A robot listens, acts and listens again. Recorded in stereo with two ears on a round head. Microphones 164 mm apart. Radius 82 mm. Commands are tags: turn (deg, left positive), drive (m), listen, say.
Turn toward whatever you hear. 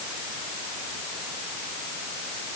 <listen/>
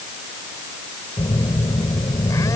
<turn deg="20"/>
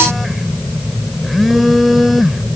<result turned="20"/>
<say>Facing the phone buzzing.</say>